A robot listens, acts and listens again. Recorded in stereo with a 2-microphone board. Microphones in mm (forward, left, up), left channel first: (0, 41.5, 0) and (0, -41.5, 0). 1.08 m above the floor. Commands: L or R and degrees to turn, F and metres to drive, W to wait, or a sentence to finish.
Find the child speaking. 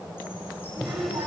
R50
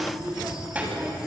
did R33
R20
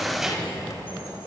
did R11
Found it: a child speaking, straight ahead.